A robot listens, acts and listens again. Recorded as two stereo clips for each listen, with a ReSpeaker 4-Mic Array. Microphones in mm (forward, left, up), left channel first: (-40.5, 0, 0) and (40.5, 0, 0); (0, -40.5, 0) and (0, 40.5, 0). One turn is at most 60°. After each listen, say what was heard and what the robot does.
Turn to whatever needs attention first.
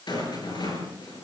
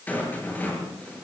Keep listening.
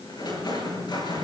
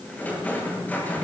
Keep listening.
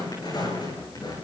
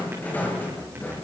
I can't make out anything urgent to turn to.